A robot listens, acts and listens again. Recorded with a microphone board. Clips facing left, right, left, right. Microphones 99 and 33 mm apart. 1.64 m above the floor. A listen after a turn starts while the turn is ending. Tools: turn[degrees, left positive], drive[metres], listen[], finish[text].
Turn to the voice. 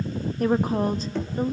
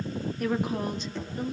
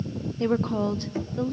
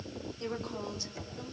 Thought: The woman speaking: about 40° left or 140° left.
Action: turn[40]
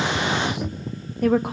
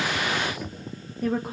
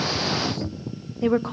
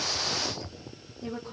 Thought: So it is at 100° left.
Action: turn[100]
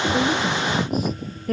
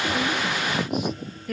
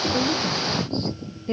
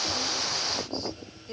Thought: The woman speaking is now 40° left.
Action: turn[40]
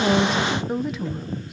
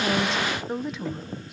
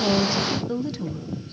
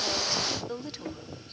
Action: finish[Found it: a woman speaking, straight ahead, 1 to 2 m away.]